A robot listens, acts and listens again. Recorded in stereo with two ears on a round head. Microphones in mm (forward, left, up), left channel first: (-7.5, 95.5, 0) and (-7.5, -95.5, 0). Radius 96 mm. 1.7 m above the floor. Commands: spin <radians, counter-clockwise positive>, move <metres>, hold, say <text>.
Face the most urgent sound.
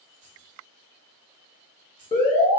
spin 0.44
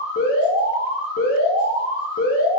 spin 2.27
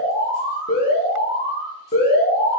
spin 0.79
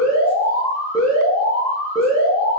spin 0.26
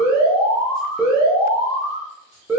say Found it: an alarm, straight ahead, 1 to 2 m away.